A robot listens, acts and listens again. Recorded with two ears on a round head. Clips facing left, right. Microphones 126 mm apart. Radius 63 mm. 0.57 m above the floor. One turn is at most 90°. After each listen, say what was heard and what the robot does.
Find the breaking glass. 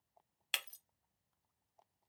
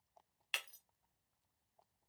The breaking glass: about 45° left or 135° left. Turn 45° left.
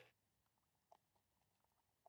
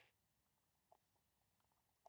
Keep listening.
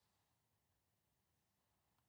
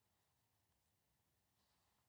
I heard breaking glass, but can't make it out now. It was about straight ahead or 90° left.